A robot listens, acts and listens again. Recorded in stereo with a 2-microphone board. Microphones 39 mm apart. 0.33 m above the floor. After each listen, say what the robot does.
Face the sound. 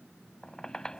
Turn 20° left.
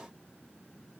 Keep listening.
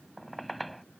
Found it: a squeak, straight ahead.